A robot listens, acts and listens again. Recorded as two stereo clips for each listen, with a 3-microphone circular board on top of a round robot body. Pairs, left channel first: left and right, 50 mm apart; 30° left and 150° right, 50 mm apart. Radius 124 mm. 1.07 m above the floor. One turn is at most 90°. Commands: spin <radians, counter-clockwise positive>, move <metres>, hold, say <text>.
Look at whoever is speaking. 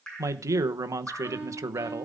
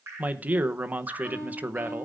spin -1.57
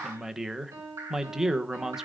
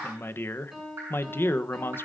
spin -0.17
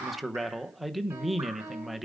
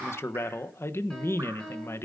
say Facing the man speaking.